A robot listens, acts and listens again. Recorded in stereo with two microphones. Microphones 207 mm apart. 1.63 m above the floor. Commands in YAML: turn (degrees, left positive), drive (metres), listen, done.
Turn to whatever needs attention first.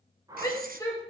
turn: 15
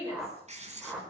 turn: 150
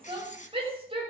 turn: -25
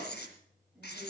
listen: true
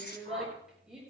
done: "Found it: a shout, straight ahead, over 4 m away."